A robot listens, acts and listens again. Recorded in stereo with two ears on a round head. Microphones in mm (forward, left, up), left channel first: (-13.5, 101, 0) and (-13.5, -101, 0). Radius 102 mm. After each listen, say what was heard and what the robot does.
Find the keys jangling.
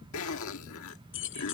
The keys jangling: about 60° left or 120° left. Turn 60° left.
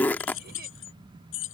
So it is at 55° left. Turn 55° left.
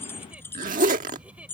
The keys jangling is now 10° left. Turn 10° left.
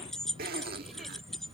Found it: keys jangling, straight ahead.